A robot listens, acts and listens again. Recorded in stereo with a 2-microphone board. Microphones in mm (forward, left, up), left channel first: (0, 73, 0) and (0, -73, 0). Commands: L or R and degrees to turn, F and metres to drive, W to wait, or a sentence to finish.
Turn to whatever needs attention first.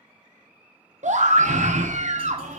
R55
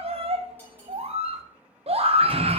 R55
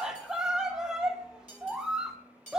Facing the scream, 1 to 2 m away.